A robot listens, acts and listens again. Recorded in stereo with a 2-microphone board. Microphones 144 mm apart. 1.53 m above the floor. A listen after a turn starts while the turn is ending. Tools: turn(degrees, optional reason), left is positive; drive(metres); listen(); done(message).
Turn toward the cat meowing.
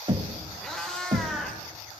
turn(degrees=30)
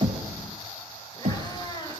turn(degrees=150, reason="So it is at 150° left.")
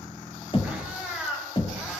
done("Found it: a cat meowing, straight ahead, 2 to 4 m away.")